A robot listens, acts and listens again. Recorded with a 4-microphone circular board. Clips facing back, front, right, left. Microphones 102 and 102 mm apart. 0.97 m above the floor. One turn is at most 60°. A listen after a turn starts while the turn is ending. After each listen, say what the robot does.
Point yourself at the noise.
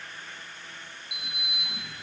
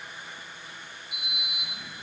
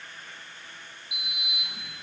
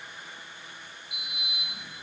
Turn 60° right.
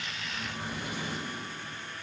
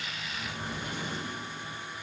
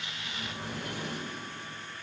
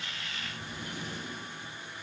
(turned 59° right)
Turn 60° right.
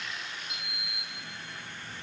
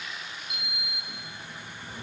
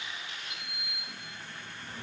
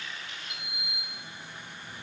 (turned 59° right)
Turn 40° right.
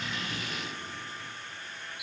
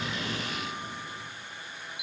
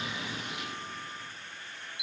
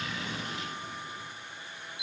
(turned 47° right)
Found it: a sliding door, straight ahead, over 4 m away.